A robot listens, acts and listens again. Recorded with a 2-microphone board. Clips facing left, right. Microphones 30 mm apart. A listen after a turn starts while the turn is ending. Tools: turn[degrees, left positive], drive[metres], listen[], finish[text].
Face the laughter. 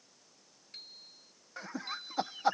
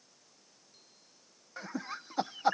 Action: turn[30]
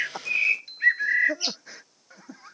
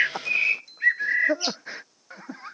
Thought: So it is at 30° right.
Action: turn[-30]
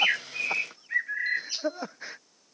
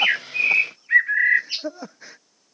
Thought: The laughter is now 20° left.
Action: turn[20]
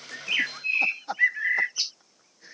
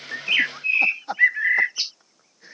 Action: finish[Found it: laughter, straight ahead.]